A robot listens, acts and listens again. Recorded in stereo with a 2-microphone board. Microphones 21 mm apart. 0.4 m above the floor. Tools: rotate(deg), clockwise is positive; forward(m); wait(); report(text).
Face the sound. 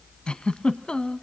rotate(-45)
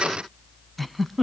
report("Found it: a giggle, straight ahead, under 1 m away.")